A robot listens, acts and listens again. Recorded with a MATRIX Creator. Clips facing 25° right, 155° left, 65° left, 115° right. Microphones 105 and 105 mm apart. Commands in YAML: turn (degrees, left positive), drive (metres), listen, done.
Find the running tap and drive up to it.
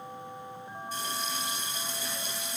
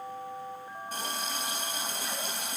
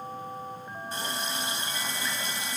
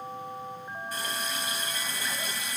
turn: 130
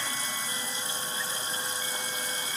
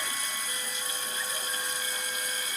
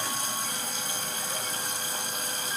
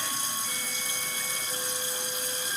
turn: 35
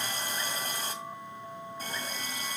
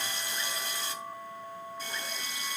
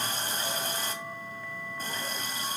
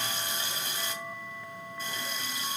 turn: 20
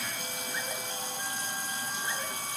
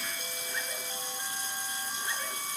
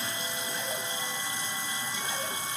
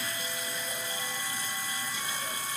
drive: 1.0
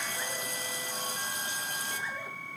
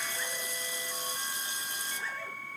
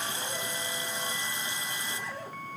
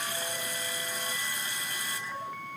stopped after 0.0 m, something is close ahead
done: "Something is in my way. I am facing the running tap but have not reached it."